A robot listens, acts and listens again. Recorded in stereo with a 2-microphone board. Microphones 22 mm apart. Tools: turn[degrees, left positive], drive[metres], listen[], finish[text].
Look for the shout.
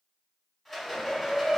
Thought: The shout: about 50° left or 130° left.
Action: turn[50]
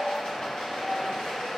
Thought: So it is at 60° left.
Action: turn[60]
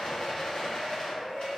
Action: finish[Found it: a shout, straight ahead, 1 to 2 m away.]